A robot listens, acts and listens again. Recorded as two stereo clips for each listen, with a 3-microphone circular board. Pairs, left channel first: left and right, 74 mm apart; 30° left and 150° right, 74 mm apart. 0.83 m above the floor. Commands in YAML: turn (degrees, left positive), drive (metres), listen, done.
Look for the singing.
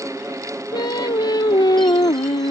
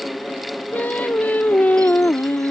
turn: 95
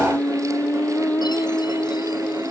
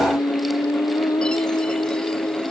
turn: 30
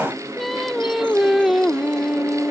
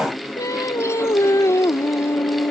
done: "Facing the singing."